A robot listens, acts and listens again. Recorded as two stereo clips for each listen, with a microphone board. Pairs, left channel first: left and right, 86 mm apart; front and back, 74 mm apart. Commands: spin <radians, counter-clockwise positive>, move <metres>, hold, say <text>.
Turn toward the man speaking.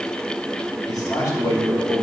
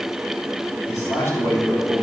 spin 0.79
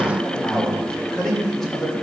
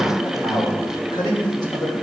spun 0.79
say Found it: a man speaking, straight ahead, 2 to 4 m away.